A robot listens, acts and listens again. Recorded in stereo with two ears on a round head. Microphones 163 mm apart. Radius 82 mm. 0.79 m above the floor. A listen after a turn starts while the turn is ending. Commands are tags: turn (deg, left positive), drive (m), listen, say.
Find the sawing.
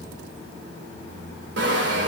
<turn deg="-70"/>
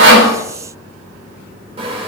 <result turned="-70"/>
<turn deg="-35"/>
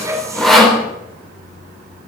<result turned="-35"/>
<say>Found it: sawing, straight ahead.</say>